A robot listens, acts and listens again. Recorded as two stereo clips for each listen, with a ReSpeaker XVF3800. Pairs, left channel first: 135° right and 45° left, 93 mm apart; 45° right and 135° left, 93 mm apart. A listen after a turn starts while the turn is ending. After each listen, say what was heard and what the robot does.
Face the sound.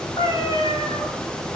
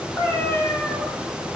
The cat meowing: 115° right. Turn 115° right.
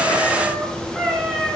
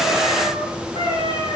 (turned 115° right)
The cat meowing is now 40° right. Turn 40° right.
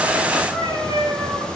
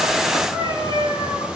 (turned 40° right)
Found it: a cat meowing, straight ahead.